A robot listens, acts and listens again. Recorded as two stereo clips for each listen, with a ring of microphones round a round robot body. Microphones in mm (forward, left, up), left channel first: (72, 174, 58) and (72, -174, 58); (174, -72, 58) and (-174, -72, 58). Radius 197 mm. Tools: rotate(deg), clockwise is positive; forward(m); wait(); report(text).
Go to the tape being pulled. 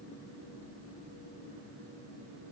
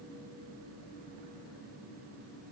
wait()
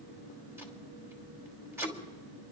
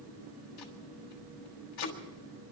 forward(1.0)
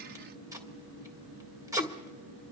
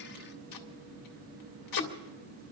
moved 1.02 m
rotate(10)
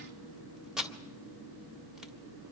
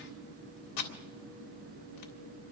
forward(1.0)
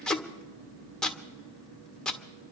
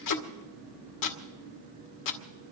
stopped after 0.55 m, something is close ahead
report("Arrived at the tape being pulled, straight ahead.")